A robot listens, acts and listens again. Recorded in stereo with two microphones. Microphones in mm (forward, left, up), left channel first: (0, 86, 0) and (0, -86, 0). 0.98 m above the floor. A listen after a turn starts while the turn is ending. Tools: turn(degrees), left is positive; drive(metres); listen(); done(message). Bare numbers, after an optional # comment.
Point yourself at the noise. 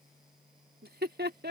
turn(-90)
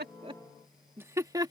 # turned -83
# So it is at 25° right.
turn(-25)
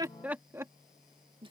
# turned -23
# The laughter is now 30° right.
turn(-30)
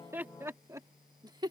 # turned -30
# The laughter is now 25° right.
turn(-25)
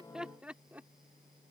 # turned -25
# The laughter is now 10° right.
turn(-10)
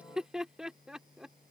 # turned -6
done("Facing the laughter.")